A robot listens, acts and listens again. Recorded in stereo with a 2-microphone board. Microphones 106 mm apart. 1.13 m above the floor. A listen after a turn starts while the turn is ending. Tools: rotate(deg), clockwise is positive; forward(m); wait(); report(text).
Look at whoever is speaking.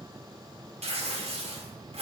wait()
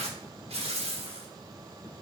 wait()
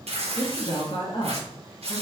rotate(-65)
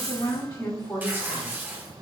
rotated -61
rotate(-35)
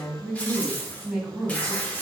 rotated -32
report("Found it: a woman speaking, straight ahead, 1 to 2 m away.")